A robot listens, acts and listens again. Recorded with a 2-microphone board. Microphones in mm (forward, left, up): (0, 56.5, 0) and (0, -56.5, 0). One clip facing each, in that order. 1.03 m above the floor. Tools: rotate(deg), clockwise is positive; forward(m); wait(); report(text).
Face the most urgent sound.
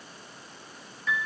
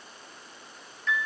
wait()
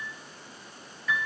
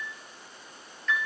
wait()
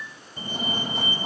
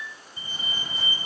rotate(-60)
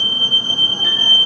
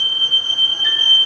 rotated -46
rotate(-40)
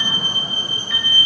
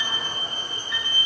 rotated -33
report("Facing the fire alarm, 2 to 4 m away.")